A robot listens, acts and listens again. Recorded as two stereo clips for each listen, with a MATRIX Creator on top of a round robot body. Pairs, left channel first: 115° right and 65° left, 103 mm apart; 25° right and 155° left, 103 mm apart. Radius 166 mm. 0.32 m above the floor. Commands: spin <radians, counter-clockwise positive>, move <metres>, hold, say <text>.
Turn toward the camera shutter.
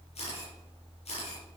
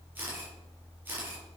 spin -2.27
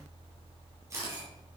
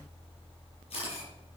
say Found it: a camera shutter, straight ahead.